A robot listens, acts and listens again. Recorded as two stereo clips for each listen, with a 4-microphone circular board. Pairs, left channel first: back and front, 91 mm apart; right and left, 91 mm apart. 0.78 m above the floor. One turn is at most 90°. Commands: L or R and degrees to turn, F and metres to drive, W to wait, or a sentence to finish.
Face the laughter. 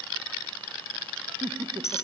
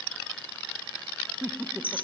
L25
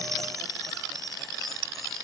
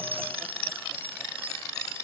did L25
W
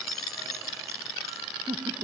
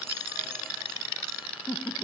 Found it: laughter, straight ahead.